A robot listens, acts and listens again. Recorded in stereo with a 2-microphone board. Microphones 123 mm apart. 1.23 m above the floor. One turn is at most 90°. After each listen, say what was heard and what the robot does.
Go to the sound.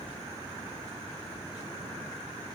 Keep listening.
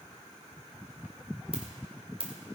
The ringtone: about 50° right or 130° right. Turn 50° right.
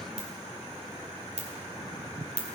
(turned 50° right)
So it is at 75° right. Turn 75° right.
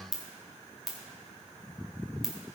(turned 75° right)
Drive 1.0 m forward.
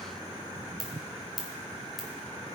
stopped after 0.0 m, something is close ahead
Blocked. The ringtone is further on, straight ahead.